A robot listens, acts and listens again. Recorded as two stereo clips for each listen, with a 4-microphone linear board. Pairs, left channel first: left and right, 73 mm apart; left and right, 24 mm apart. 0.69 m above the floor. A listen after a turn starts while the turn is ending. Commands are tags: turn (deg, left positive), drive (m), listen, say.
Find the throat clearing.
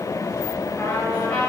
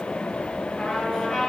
<listen/>
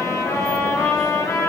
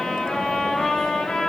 <listen/>
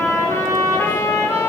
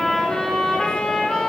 <say>I can't make out throat clearing, only a trumpet.</say>